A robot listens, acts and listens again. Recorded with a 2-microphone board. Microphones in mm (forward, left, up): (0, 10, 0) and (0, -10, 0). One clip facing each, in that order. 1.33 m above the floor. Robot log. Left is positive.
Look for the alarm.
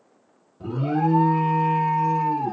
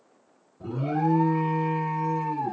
note: The alarm: about 60° left or 120° left.
cmd yaw +60
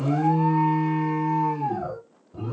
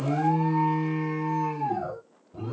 end: Facing the alarm.